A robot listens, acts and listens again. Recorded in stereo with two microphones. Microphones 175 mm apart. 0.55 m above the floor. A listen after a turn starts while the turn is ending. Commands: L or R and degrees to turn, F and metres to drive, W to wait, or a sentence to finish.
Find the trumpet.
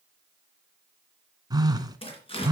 W
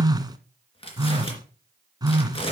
W
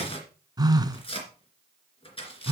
I can't make out a trumpet, only tearing paper and a phone buzzing.